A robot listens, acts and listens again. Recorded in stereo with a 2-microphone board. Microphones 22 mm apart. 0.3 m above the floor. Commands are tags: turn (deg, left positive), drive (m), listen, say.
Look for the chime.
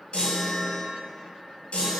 <turn deg="65"/>
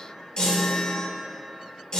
<turn deg="45"/>
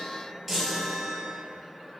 <say>Found it: a chime, straight ahead, 1 to 2 m away.</say>